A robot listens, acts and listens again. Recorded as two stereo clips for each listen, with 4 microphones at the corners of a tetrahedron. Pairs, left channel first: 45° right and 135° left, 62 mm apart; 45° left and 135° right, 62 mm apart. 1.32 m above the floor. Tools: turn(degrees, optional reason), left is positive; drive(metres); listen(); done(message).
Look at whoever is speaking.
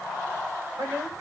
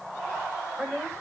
turn(degrees=155, reason="The woman speaking: 155° left.")
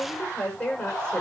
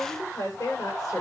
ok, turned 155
turn(degrees=30, reason="The woman speaking is now 30° left.")
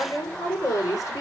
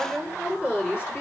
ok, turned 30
turn(degrees=-10, reason="The woman speaking is now 10° right.")
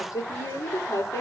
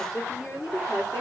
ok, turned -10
done("Facing the woman speaking, over 4 m away.")